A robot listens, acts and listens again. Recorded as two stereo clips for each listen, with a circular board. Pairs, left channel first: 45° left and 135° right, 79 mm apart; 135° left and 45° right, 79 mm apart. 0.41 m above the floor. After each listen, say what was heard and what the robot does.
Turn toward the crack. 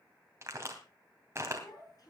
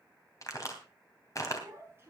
The crack: 175° left. Turn 175° left.
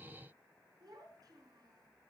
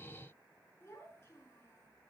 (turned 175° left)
Facing where the crack came from. I can't hear it now.